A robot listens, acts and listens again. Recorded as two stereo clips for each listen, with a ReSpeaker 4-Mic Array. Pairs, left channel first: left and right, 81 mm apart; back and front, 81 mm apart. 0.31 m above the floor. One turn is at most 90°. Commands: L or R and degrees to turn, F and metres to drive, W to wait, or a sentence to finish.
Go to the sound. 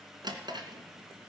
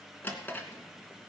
R90
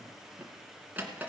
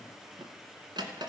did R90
R20
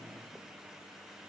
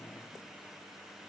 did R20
W
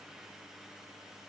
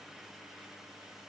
W
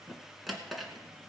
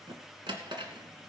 F1.0
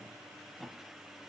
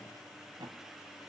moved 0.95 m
F1.0
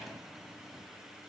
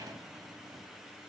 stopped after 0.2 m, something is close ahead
W
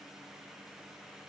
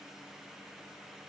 W
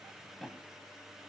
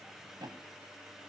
Arrived at the drawer, straight ahead.